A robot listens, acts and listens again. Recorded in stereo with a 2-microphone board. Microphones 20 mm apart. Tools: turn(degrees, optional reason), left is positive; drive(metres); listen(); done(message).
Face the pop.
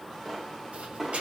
turn(degrees=-30)
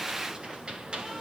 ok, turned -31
listen()
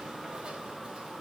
done("I heard a pop, but can't make it out now. It was about 15° left or 135° right.")